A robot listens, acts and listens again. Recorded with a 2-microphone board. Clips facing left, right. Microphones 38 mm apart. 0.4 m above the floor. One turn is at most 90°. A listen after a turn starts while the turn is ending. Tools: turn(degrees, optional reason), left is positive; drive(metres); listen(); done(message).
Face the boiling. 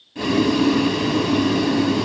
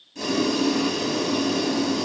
turn(degrees=30, reason="The boiling: about 30° left or 150° left.")
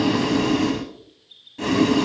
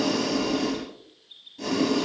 turn(degrees=90, reason="So it is at 120° left.")
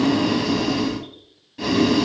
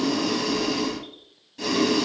turn(degrees=20, reason="The boiling is now 20° left.")
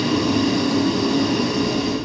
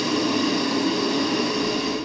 done("Found it: boiling, straight ahead, 1 to 2 m away.")